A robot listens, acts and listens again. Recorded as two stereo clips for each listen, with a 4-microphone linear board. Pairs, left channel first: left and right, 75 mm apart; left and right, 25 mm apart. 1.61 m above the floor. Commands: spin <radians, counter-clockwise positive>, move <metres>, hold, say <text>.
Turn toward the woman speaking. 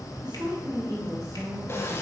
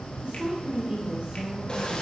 spin -0.70
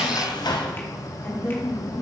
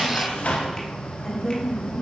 spin 0.61
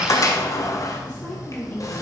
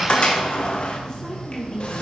spin 0.52
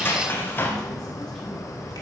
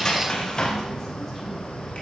hold
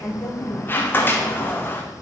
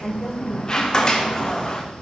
spin 0.17
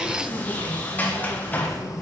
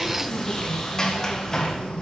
hold
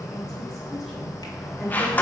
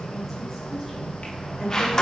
say Facing the woman speaking.